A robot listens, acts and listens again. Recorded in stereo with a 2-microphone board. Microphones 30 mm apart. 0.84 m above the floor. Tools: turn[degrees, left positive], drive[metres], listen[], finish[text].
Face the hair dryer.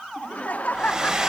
Thought: The hair dryer: about 25° right or 155° right.
Action: turn[-25]
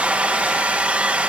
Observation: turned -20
Thought: So it is at 135° right.
Action: turn[-135]
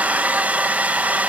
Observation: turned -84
Thought: The hair dryer is now 50° right.
Action: turn[-50]
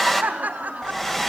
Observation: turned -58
Thought: The hair dryer is now 10° left.
Action: turn[10]
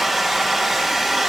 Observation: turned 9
Action: finish[Facing the hair dryer.]